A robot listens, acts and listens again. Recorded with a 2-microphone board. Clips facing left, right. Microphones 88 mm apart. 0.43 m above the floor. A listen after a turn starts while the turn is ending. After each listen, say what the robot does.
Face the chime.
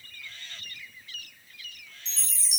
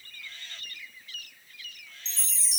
Turn 30° right.
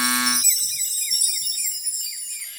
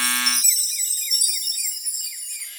Found it: a chime, straight ahead, under 1 m away.